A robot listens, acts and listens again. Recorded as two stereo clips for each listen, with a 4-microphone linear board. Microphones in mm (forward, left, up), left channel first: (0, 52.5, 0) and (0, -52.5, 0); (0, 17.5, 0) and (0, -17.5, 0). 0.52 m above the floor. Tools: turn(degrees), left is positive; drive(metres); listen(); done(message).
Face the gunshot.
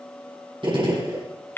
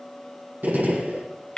turn(degrees=-55)
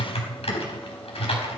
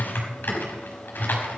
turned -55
listen()
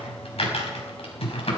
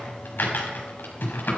done("I heard a gunshot, but can't make it out now. It was about straight ahead or 70° right.")